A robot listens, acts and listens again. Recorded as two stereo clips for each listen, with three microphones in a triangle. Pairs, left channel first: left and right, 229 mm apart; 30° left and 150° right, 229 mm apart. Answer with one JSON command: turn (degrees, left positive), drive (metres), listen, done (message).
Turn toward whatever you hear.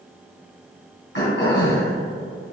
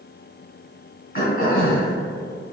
{"turn": 70}
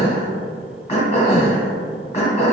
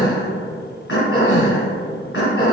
{"turn": 35}
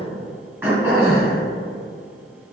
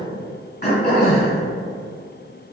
{"turn": -10}
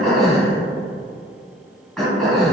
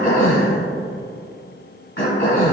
{"done": "Found it: throat clearing, straight ahead, 1 to 2 m away."}